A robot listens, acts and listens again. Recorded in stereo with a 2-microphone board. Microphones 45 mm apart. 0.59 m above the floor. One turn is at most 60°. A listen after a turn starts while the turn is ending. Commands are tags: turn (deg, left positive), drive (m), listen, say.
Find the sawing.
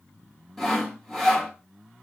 <turn deg="30"/>
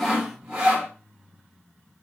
<turn deg="-20"/>
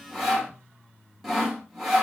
<say>Facing the sawing.</say>